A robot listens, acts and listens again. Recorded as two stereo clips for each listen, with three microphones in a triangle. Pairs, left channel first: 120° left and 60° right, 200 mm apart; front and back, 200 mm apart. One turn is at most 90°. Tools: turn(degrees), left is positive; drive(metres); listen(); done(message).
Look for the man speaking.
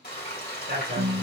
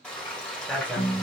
turn(degrees=-80)
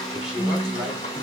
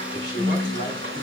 turn(degrees=30)
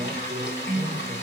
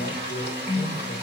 listen()
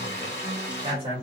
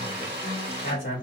done("Found it: a man speaking, straight ahead.")